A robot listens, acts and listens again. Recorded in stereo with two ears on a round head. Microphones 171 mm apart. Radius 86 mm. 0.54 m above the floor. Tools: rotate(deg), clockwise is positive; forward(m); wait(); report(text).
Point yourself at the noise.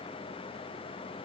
wait()
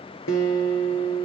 rotate(-90)
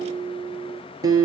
rotate(20)
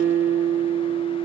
report("Facing the guitar.")